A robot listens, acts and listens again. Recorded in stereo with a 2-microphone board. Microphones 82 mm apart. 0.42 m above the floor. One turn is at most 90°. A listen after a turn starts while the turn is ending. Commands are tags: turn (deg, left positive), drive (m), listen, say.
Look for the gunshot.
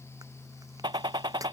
<turn deg="-90"/>
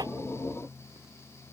<say>Facing where the gunshot came from. I can't hear it now.</say>